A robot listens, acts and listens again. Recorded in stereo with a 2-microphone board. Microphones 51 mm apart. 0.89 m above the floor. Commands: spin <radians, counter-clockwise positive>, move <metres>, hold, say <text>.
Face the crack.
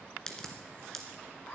spin 0.52
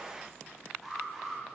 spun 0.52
hold
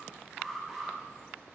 say I heard a crack, but can't make it out now. It was about 15° right or 135° left.